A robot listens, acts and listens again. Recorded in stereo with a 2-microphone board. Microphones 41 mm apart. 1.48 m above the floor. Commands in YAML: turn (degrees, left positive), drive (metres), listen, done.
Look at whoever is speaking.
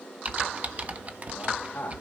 turn: 45
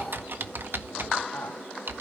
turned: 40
turn: 95
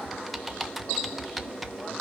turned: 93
listen: true
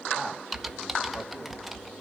listen: true
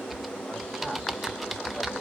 done: "I heard a man speaking from this way, but can't make it out now."